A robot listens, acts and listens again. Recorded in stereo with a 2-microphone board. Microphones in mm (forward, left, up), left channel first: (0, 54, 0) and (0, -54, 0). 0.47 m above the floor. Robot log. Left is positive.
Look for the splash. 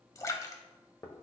note: The splash: about 30° left or 150° left.
cmd yaw +30
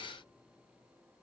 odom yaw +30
cmd idle
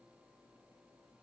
end: I heard a splash, but can't make it out now. It was about straight ahead or 120° left.